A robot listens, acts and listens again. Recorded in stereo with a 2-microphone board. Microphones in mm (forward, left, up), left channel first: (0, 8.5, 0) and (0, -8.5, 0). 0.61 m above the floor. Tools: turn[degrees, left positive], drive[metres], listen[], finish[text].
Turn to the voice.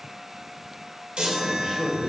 Thought: The man speaking: about 70° right or 110° right.
Action: turn[-70]
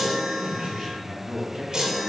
Thought: So it is at 35° right.
Action: turn[-35]
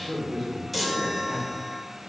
Action: finish[Facing the man speaking, over 4 m away.]